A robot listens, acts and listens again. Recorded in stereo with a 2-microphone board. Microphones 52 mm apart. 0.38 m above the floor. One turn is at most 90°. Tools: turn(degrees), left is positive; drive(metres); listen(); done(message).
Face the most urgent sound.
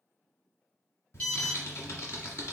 turn(degrees=30)
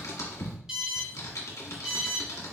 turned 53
turn(degrees=-15)
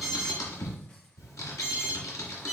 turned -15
done("Found it: an alarm, straight ahead, 1 to 2 m away.")